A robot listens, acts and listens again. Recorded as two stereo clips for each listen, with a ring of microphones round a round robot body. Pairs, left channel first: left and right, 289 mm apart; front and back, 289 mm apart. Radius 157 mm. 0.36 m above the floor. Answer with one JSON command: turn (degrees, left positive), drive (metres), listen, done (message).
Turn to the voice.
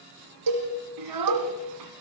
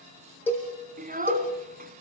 {"turn": -120}
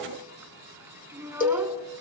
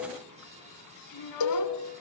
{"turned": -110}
{"turn": -10}
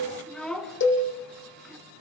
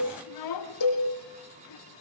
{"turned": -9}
{"done": "Found it: a child speaking, straight ahead, 2 to 4 m away."}